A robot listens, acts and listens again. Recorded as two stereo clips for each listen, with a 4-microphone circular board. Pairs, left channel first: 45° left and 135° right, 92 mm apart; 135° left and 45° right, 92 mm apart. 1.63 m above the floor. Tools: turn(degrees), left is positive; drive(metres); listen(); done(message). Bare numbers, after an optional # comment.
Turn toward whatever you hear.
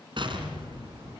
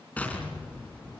# The explosion: 150° right.
turn(-150)
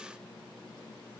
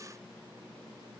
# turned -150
done("I heard an explosion from this way, but can't make it out now.")